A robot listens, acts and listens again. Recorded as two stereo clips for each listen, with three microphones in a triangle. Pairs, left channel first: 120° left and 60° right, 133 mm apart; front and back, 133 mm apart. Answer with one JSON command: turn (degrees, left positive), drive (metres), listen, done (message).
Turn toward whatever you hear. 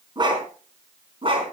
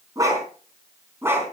{"turn": -105}
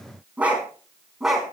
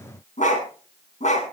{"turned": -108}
{"turn": 30}
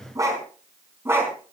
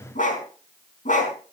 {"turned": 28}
{"turn": 15}
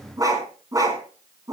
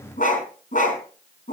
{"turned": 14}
{"done": "Found it: a dog barking, straight ahead."}